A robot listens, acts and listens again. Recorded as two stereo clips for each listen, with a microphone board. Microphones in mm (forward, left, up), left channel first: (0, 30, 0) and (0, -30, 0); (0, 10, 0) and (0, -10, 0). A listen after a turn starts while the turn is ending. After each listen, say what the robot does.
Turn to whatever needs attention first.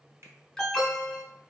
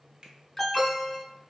Turn 30° left.
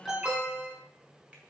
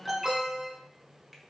Turn 30° right.
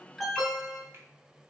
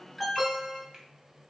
Facing the alarm, 1 to 2 m away.